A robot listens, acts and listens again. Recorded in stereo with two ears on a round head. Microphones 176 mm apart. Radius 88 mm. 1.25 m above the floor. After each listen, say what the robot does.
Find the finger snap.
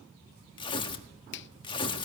Turn 60° left.
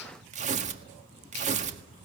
Keep listening.
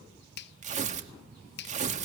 Turn 55° left.
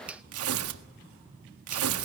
Facing the finger snap.